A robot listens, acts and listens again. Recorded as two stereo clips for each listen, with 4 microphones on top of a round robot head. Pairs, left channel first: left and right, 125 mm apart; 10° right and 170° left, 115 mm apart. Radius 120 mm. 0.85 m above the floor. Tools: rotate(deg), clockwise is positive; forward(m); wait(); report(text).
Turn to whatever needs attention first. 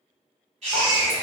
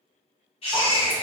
rotate(50)
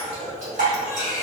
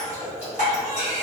report("Found it: a baby crying, straight ahead.")